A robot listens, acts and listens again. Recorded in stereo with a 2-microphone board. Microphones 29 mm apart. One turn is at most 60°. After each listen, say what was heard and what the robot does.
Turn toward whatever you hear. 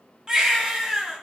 The baby crying: about 25° right or 155° right. Turn 25° right.
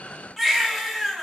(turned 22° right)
Facing the baby crying.